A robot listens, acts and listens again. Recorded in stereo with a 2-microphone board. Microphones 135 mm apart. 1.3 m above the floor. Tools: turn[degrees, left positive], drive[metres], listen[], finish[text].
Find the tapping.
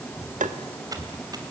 Thought: The tapping: about 70° right or 110° right.
Action: turn[-70]
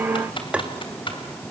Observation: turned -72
Thought: So it is at 10° right.
Action: turn[-10]
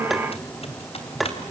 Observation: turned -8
Action: finish[Facing the tapping, 1 to 2 m away.]